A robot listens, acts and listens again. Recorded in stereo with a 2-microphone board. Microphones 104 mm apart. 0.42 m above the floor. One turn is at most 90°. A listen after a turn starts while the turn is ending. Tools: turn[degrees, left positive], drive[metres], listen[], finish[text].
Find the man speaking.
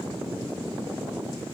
Action: listen[]
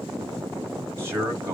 Thought: The man speaking: about 25° right or 155° right.
Action: turn[-25]
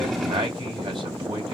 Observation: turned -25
Thought: So it is at 125° right.
Action: turn[-90]
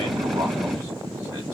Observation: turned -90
Thought: Nothing new. It was at 35° right.
Action: turn[-35]
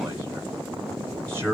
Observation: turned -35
Thought: The man speaking is now 30° right.
Action: turn[-30]
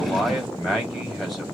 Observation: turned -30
Action: finish[Facing the man speaking.]